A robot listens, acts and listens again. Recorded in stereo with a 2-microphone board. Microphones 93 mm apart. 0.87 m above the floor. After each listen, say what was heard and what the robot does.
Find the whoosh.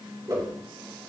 The whoosh: about 40° right or 140° right. Turn 40° right.
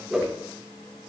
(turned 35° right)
So it is at 10° right. Turn 10° right.
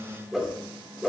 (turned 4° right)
Facing the whoosh.